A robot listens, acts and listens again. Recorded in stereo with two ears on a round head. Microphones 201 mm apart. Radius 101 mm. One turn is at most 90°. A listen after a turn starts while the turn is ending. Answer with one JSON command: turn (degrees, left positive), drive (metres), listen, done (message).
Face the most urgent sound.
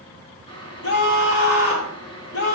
{"turn": 70}
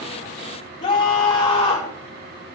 {"turn": 30}
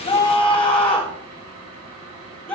{"done": "Found it: a scream, straight ahead."}